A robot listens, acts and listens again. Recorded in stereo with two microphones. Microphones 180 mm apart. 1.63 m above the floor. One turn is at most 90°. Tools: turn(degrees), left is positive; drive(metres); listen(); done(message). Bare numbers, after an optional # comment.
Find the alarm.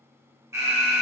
# The alarm: about 15° right or 165° right.
turn(-15)
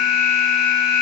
done("Found it: an alarm, straight ahead, 1 to 2 m away.")